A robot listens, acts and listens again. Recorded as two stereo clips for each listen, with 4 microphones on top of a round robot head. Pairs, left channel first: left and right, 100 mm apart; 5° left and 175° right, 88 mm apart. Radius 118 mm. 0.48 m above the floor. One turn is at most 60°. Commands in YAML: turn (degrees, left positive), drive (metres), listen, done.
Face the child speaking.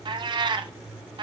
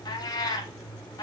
listen: true
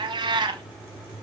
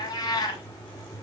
listen: true
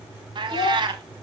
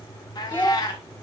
turn: 60
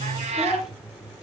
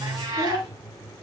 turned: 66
turn: -10
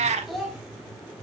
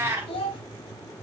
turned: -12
done: "Facing the child speaking, 2 to 4 m away."